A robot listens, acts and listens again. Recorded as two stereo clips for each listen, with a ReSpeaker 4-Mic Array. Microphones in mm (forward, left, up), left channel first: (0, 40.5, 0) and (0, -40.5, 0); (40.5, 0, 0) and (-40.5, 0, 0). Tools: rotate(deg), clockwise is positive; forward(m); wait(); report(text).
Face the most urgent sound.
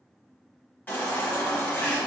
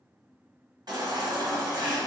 rotate(-160)
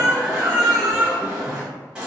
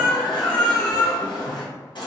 rotate(10)
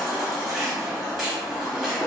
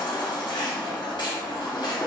report("Facing the baby crying, under 1 m away.")